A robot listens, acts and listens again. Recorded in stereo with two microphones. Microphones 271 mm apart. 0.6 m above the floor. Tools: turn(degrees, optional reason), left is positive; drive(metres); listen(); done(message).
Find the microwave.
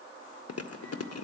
listen()
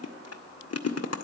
listen()
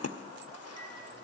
done("I can't make out a microwave to turn to.")